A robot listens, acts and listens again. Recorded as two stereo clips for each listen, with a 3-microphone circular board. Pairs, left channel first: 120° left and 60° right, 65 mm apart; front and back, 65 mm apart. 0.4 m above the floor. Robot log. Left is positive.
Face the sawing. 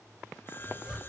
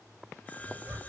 note: The sawing: 65° left.
cmd yaw +65
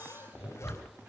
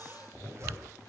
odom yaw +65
cmd idle
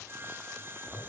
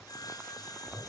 note: The sawing is now 10° right.
cmd yaw -10
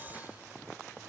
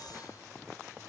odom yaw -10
cmd idle
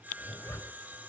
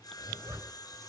end: Found it: sawing, straight ahead.